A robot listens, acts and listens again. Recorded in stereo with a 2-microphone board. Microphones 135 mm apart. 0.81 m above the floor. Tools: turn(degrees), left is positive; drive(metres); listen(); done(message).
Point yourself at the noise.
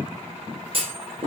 turn(degrees=-45)
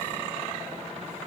listen()
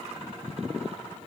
done("I heard a clunk, but can't make it out now. It was about straight ahead or 90° right.")